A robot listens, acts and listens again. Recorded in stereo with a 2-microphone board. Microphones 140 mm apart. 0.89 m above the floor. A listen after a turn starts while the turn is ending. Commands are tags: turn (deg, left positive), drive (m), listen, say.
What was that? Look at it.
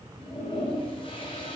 <turn deg="40"/>
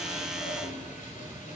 <listen/>
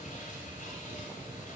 <listen/>
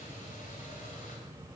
<say>I heard a toilet flushing, but can't make it out now. It was about straight ahead or 100° left.</say>